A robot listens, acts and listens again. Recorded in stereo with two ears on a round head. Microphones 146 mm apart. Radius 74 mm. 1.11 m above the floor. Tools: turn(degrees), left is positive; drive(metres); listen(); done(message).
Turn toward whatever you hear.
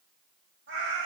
turn(degrees=-90)
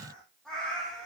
done("Facing the cat meowing.")